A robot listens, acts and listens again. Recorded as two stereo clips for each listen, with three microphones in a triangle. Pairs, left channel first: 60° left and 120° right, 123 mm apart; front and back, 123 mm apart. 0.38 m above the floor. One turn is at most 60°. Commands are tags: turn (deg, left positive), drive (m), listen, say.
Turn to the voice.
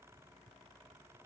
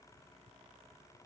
<listen/>
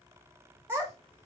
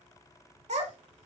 <turn deg="60"/>
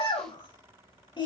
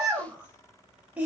<turn deg="60"/>
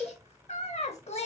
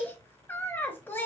<turn deg="60"/>
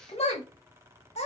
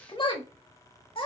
<turn deg="40"/>
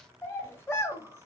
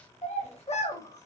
<turn deg="-10"/>
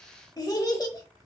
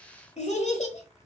<say>Found it: a child speaking, straight ahead, under 1 m away.</say>